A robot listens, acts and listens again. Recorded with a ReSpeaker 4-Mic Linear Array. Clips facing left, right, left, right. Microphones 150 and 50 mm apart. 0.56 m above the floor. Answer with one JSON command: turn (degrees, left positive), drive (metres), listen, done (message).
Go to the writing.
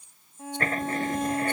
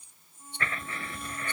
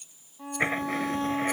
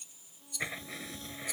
{"turn": 40}
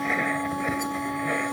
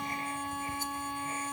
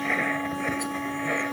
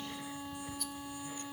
{"turn": 100}
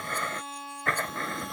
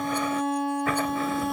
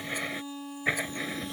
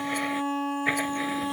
{"drive": 1.0}
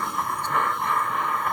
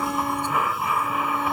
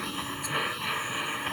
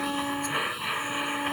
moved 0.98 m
{"drive": 1.0}
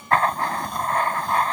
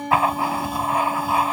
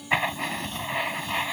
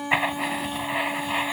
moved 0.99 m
{"turn": -10}
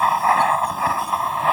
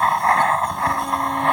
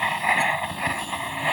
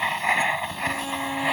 {"drive": 1.0}
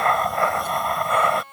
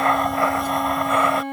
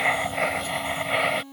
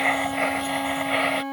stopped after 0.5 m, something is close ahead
{"done": "Arrived at the writing, straight ahead."}